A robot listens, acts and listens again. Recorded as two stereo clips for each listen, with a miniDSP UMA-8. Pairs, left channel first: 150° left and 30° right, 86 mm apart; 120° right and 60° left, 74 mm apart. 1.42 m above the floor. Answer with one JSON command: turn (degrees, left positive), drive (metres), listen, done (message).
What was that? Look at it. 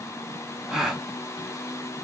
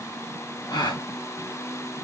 {"turn": -115}
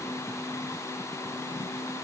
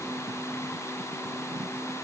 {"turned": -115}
{"done": "Facing where the gasp came from. I can't hear it now."}